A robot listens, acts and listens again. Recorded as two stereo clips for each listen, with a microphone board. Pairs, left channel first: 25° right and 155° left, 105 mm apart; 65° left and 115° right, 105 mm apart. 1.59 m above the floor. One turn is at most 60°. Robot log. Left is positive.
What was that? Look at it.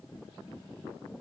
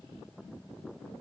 cmd idle
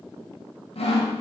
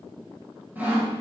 note: The sawing: 40° right.
cmd yaw -40
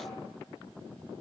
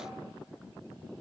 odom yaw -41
cmd idle
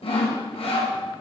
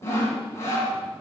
end: Facing the sawing, 1 to 2 m away.